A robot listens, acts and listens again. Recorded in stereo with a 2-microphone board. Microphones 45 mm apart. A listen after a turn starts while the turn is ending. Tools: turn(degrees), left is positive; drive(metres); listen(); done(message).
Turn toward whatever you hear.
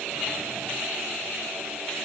listen()
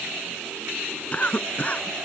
turn(degrees=30)
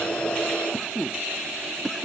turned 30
done("Found it: a cough, straight ahead.")